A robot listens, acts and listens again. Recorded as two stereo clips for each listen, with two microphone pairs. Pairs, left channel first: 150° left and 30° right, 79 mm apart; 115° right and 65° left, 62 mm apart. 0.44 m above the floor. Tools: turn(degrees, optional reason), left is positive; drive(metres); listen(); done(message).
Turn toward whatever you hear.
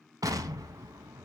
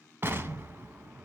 turn(degrees=10, reason="The explosion: 10° left.")
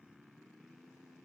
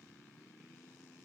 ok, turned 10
done("I heard an explosion from this way, but can't make it out now.")